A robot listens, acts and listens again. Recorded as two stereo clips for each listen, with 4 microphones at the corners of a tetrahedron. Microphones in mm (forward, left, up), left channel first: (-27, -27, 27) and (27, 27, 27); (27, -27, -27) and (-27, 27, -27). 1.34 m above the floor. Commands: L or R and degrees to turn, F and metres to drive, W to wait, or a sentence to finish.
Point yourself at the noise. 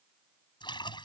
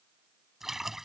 R140
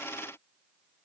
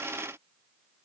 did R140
Facing where the splash came from. I can't hear it now.